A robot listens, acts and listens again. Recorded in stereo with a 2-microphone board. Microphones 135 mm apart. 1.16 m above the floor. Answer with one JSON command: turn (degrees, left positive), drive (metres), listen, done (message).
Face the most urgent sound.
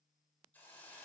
{"listen": true}
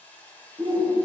{"turn": -35}
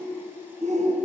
{"turn": -100}
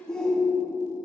{"done": "Found it: a shout, straight ahead."}